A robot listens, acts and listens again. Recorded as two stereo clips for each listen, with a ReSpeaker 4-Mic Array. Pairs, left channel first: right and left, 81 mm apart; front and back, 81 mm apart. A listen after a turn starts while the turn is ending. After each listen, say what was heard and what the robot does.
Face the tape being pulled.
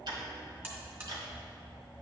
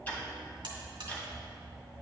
Keep listening.
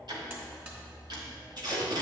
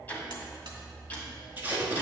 The tape being pulled: 115° left. Turn 115° left.
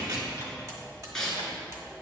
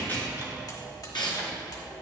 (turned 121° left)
Found it: tape being pulled, straight ahead.